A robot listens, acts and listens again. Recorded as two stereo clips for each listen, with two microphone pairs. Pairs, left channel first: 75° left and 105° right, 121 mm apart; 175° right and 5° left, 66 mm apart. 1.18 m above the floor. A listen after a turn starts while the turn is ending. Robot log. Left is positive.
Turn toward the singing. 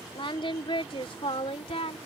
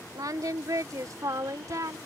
note: The singing: 40° left.
cmd yaw +40
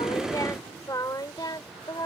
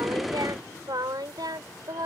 note: The singing is now 20° left.
cmd yaw +20
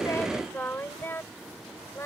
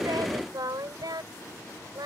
end: Facing the singing.